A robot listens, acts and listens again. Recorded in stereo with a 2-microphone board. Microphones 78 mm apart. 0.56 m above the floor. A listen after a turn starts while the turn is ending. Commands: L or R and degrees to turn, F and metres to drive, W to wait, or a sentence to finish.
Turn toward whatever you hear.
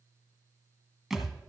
R30
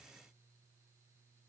W
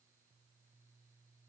I heard a thud, but can't make it out now. It was about 25° left or 145° right.